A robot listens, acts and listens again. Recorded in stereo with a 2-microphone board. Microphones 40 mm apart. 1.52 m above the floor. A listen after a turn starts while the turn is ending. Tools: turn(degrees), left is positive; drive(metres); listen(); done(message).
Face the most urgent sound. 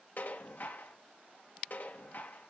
listen()
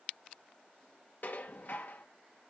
listen()
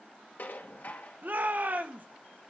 turn(degrees=-55)
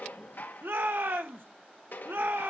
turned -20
turn(degrees=-105)
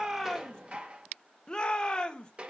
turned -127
turn(degrees=25)
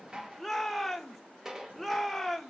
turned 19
done("Facing the shout.")